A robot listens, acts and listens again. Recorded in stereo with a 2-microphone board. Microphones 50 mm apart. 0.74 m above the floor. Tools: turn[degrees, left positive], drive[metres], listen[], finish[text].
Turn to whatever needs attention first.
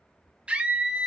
Thought: The scream: about 20° right or 160° right.
Action: turn[-20]
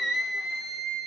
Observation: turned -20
Action: finish[Facing the scream, 1 to 2 m away.]